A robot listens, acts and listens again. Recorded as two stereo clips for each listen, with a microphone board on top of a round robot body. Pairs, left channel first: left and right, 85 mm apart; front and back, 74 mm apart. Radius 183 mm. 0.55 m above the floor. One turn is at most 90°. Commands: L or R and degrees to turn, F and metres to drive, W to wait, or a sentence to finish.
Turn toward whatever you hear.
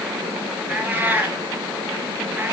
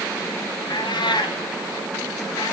R15
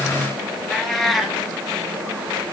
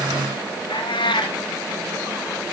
Facing the cat meowing.